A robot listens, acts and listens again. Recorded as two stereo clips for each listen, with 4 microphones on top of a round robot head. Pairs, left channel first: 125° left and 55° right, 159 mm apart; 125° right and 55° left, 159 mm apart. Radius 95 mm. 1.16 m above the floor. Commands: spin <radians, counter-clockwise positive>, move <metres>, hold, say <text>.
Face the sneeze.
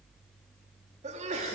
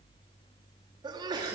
spin -0.17
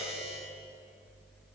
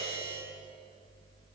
say Facing where the sneeze came from. I can't hear it now.